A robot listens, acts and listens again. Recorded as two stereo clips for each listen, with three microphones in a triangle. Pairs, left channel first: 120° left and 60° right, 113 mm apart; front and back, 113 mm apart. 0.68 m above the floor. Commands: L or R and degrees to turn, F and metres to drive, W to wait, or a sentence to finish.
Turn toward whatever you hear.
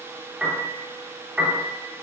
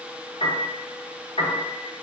L20
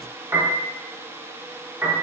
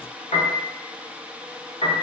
Facing the piano.